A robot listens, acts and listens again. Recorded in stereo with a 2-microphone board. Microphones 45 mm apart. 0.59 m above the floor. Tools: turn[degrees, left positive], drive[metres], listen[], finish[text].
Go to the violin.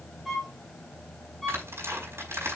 Action: turn[30]
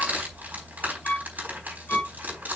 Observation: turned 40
Thought: So it is at 135° left.
Action: turn[135]
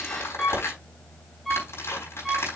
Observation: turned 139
Action: drive[1.0]
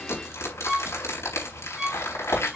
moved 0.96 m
Action: drive[1.0]
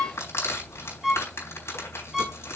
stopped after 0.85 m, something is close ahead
Thought: The violin is now 10° right.
Action: turn[-10]
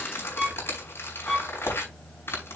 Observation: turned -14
Action: finish[Arrived at the violin, straight ahead.]